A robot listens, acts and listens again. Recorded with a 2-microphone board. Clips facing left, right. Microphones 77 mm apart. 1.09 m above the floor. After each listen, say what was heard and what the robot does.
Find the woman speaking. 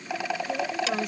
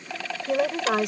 Turn 90° right.
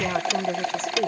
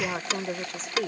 Found it: a woman speaking, straight ahead.